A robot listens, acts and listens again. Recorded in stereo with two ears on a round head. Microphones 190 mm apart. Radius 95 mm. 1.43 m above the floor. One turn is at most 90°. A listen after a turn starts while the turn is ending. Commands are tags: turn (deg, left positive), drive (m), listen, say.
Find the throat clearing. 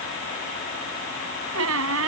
<listen/>
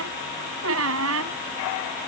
<listen/>
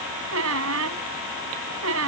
<say>I can't make out throat clearing, only a squeak.</say>